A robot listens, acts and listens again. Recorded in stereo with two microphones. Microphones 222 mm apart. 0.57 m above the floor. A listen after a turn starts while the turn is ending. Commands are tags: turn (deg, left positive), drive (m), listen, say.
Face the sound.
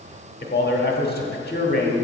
<turn deg="50"/>
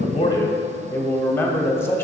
<turn deg="15"/>
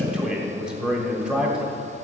<say>Found it: a man speaking, straight ahead, 1 to 2 m away.</say>